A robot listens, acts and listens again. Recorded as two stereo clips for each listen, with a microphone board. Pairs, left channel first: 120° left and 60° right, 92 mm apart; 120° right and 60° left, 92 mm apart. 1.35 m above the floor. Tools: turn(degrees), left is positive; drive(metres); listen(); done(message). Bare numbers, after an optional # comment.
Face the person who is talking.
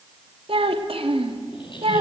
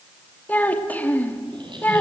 # The child speaking: 50° right.
turn(-50)
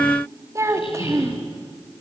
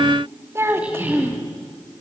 done("Found it: a child speaking, straight ahead.")